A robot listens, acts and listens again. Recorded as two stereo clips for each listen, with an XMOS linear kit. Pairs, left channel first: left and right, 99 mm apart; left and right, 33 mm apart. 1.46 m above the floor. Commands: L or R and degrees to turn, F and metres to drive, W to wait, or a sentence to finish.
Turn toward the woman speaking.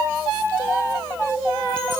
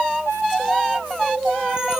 W
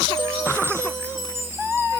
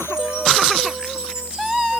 W
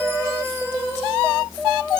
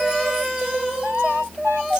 I can't make out a woman speaking.